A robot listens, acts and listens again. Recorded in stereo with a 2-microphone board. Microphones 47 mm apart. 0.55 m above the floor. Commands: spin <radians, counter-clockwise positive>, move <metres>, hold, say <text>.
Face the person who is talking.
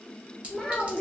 spin 0.52
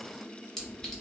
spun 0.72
hold
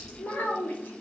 spin 2.27
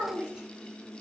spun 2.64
spin -0.35
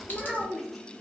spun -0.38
say Facing the child speaking.